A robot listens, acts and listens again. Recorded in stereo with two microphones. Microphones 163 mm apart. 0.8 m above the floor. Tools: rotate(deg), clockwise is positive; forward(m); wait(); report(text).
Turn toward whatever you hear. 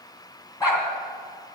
rotate(-20)
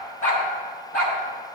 rotate(-115)
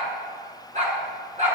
rotate(50)
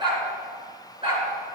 rotate(35)
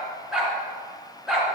report("Facing the dog barking.")